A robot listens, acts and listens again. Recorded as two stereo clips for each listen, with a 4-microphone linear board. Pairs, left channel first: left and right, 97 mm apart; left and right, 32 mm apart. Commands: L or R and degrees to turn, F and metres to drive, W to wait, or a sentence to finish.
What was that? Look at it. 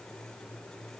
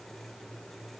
W
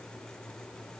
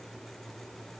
W
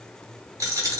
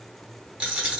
R30
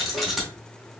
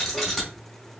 Found it: a dropped coin, straight ahead.